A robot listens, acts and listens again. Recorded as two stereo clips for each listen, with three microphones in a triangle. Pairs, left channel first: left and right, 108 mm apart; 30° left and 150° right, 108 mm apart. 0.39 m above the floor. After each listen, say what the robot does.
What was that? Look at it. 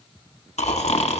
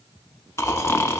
Turn 95° left.
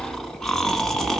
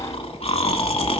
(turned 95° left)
Found it: snoring, straight ahead, under 1 m away.